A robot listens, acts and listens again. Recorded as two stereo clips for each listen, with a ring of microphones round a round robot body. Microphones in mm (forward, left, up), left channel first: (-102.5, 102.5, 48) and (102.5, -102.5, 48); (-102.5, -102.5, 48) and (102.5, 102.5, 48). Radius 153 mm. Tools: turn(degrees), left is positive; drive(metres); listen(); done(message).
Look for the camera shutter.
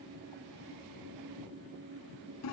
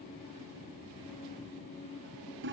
listen()
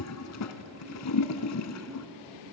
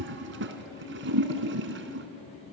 listen()
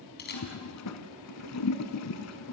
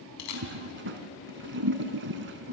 turn(degrees=-165)
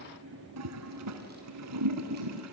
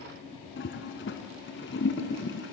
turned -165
listen()
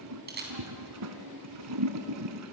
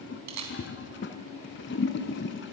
turn(degrees=15)
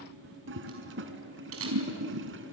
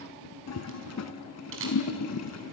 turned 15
done("Found it: a camera shutter, straight ahead, over 4 m away.")